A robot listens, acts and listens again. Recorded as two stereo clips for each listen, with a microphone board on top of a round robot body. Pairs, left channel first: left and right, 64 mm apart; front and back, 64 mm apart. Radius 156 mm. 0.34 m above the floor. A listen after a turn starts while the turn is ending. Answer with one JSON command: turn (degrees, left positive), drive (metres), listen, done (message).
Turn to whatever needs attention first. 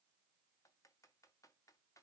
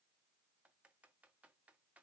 {"listen": true}
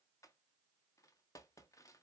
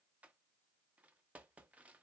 {"listen": true}
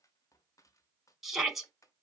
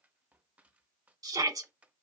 {"turn": -175}
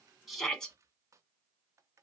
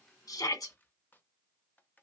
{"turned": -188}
{"turn": 10}
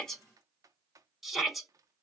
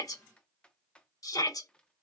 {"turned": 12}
{"done": "Facing the shout, 2 to 4 m away."}